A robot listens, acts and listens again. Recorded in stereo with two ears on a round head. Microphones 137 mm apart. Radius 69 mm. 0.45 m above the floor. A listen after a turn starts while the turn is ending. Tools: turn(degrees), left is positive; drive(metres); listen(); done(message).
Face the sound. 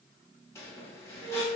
turn(degrees=20)
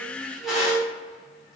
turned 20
done("Facing the squeak.")